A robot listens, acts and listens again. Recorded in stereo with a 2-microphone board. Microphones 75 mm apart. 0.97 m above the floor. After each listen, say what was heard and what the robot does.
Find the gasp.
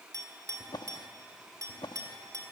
Keep listening.
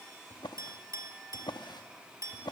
Keep listening.
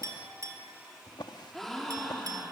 Turn 30° left.
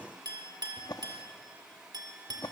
Keep listening.
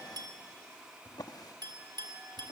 I heard a gasp, but can't make it out now. It was about 25° right or 145° left.